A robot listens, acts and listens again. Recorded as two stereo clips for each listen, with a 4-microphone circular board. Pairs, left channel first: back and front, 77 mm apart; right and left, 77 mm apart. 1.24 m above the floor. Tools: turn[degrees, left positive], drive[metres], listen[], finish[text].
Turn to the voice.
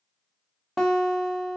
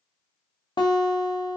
Action: listen[]
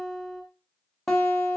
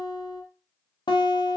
Action: listen[]
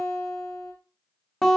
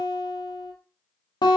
Action: finish[I can't make out anyone speaking, only a guitar.]